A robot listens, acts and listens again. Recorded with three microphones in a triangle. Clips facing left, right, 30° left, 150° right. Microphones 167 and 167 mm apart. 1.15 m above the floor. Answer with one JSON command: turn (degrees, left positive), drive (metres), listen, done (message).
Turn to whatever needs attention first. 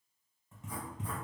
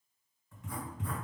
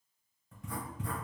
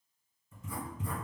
{"listen": true}
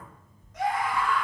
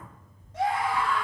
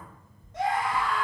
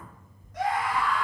{"turn": -35}
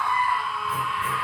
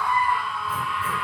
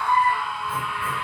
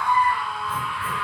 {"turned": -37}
{"done": "Found it: a scream, straight ahead, 1 to 2 m away."}